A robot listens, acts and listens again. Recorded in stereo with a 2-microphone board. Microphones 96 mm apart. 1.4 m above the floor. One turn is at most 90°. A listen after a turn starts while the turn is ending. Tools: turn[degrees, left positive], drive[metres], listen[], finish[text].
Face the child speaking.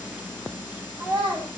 Thought: The child speaking: about 55° right or 125° right.
Action: turn[-55]
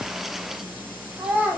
Thought: So it is at 20° right.
Action: turn[-20]
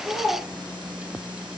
Action: finish[Facing the child speaking, 1 to 2 m away.]